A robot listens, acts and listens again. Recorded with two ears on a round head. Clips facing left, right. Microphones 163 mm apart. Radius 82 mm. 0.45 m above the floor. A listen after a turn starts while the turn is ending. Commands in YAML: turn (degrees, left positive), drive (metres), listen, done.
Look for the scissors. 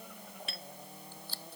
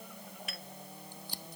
turn: -30
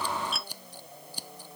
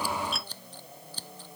turn: 15
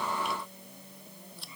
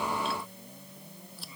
done: "Facing the scissors."